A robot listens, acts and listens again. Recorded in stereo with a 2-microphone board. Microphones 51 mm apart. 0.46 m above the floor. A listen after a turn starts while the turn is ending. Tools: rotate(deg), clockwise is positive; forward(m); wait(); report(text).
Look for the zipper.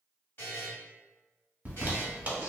rotate(30)
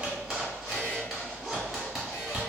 report("Found it: a zipper, straight ahead, under 1 m away.")